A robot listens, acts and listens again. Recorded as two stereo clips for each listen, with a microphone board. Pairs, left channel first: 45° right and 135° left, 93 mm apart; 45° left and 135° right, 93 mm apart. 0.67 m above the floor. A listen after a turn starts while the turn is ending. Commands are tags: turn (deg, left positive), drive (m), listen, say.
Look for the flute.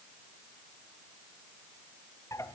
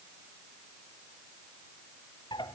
<listen/>
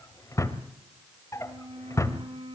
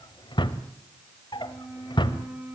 <turn deg="150"/>
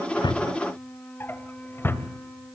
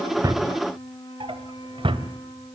<turn deg="30"/>
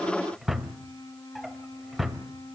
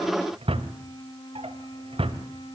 <say>Found it: a flute, straight ahead.</say>